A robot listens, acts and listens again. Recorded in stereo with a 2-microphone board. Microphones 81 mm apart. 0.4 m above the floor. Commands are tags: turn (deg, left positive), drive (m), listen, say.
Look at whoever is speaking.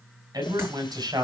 <turn deg="-55"/>
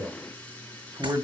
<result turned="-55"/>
<turn deg="-60"/>
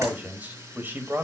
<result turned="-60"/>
<turn deg="-25"/>
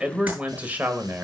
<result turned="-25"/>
<turn deg="-25"/>
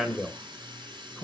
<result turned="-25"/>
<say>Facing the man speaking.</say>